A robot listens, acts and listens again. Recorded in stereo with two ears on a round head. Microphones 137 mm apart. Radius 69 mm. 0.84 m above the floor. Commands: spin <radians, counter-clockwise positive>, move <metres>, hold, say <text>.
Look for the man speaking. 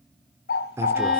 spin -0.26
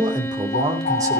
spin -0.44
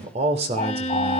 spin -2.44
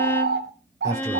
spin -0.44
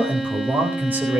spin -0.17
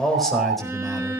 say Found it: a man speaking, straight ahead.